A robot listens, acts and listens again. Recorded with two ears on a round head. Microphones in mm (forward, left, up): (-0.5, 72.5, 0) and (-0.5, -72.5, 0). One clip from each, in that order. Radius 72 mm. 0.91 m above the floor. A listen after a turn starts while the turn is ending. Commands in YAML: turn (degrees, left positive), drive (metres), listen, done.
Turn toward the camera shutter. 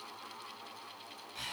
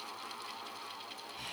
listen: true
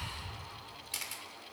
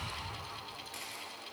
turn: 90
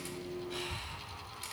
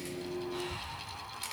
turn: -10
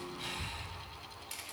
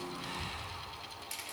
done: "Found it: a camera shutter, straight ahead, 2 to 4 m away."